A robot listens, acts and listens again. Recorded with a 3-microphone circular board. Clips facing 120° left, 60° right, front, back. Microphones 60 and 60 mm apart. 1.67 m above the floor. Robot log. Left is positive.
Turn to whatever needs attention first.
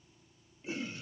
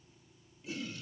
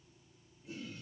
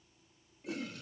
cmd idle
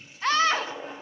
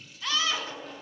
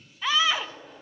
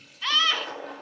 note: The scream: 80° left.
cmd yaw +80
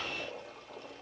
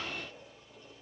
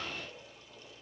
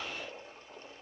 cmd idle
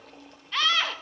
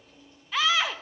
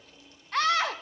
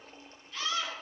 note: The scream is now 25° left.
cmd yaw +25
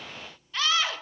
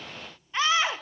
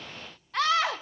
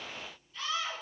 note: The scream is now 10° left.
cmd yaw +10
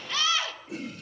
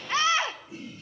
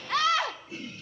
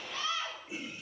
end: Facing the scream.